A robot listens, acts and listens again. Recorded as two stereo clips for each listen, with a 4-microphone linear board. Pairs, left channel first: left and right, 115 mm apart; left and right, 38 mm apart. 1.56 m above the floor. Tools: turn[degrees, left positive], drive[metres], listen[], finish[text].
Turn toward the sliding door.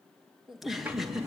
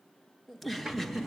Thought: The sliding door: about 15° right or 165° right.
Action: turn[-15]
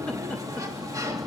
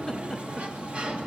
Thought: So it is at 150° right.
Action: turn[-150]
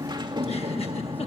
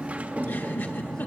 Thought: The sliding door is now 40° right.
Action: turn[-40]
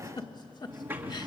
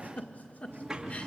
Thought: The sliding door is now 20° right.
Action: turn[-20]
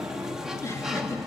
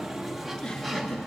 Action: finish[Found it: a sliding door, straight ahead, 2 to 4 m away.]